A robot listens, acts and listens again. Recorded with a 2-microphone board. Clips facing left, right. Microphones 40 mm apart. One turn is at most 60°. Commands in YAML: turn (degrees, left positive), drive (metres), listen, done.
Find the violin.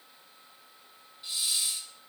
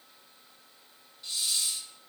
listen: true
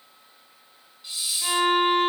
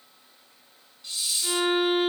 turn: 60
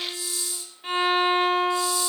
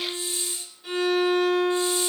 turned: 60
turn: 45
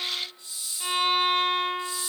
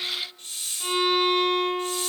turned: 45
done: "Facing the violin, 2 to 4 m away."